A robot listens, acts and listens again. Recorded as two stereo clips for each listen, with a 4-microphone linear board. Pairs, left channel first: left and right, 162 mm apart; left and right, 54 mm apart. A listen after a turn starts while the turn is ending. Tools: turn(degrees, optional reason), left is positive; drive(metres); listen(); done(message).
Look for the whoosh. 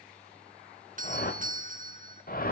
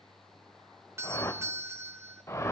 turn(degrees=65, reason="The whoosh: about 65° left or 115° left.")
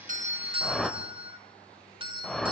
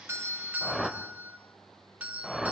done("Facing the whoosh.")